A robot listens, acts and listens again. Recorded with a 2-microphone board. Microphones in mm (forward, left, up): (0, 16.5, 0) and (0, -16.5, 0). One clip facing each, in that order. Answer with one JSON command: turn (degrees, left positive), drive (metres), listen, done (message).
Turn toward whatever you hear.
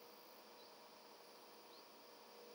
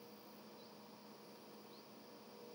{"listen": true}
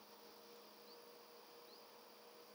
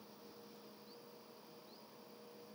{"listen": true}
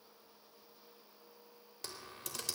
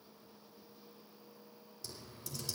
{"turn": 65}
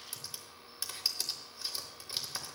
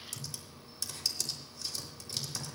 {"turn": 25}
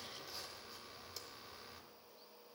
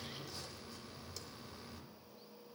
{"turn": 10}
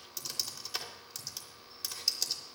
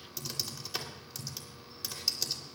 {"done": "Facing the typing on a keyboard, 2 to 4 m away."}